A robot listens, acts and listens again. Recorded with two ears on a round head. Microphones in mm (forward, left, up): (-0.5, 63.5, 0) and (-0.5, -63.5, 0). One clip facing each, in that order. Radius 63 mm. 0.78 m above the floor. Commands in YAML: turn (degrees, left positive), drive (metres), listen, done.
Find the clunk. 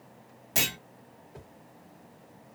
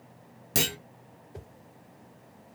turn: -45
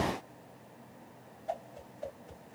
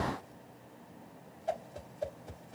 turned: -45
listen: true
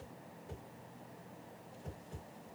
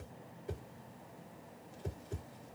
done: "I heard a clunk, but can't make it out now. It was about straight ahead or 90° right."